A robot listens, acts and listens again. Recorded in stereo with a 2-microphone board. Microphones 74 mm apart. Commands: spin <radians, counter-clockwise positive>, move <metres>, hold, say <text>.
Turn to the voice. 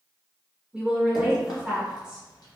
spin -0.52
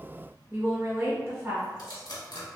spin -2.36
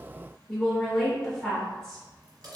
say Facing the woman speaking, 1 to 2 m away.